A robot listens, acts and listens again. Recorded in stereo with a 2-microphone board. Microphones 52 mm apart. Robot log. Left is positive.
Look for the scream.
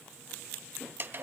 cmd idle
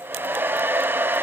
cmd idle
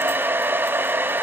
end: I can't make out a scream, only a hair dryer.